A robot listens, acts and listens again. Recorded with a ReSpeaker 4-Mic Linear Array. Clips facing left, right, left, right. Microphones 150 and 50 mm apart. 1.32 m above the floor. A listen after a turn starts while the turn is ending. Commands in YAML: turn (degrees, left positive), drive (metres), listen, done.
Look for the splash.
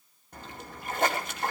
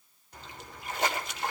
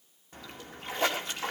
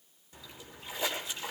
turn: 55
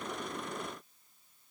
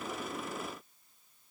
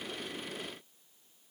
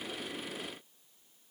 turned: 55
listen: true
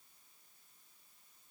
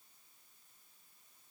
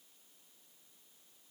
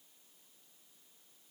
done: "I heard a splash, but can't make it out now. It was about straight ahead or 70° left."